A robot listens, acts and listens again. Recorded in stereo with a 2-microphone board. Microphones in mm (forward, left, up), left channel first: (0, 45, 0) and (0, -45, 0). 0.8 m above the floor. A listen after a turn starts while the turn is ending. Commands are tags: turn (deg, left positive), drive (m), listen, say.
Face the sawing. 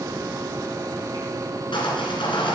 <turn deg="90"/>
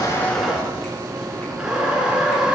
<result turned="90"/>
<turn deg="-10"/>
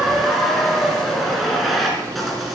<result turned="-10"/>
<say>Facing the sawing.</say>